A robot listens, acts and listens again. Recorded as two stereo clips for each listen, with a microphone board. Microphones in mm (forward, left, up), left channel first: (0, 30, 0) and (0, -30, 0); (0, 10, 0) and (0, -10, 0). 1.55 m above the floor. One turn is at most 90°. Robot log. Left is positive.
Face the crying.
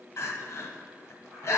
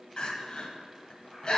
note: The crying: about 45° left or 135° left.
cmd yaw +45
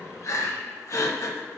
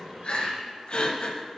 note: So it is at 75° left.
cmd yaw +75
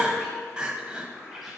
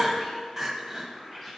note: The crying is now 15° right.
cmd yaw -15
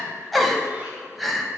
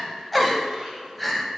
end: Facing the crying, under 1 m away.